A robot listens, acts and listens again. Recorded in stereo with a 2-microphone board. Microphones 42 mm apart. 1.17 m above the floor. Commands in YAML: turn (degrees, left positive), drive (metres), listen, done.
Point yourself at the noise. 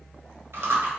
turn: -75
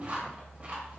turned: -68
turn: -35
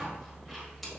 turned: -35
listen: true
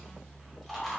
done: "Facing the chewing, 1 to 2 m away."